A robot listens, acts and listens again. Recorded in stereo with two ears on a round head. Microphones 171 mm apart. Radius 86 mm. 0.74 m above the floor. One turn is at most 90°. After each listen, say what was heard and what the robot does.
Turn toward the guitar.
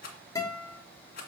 The guitar: about 20° left or 160° left. Turn 20° left.
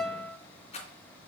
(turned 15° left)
Found it: a guitar, straight ahead, 2 to 4 m away.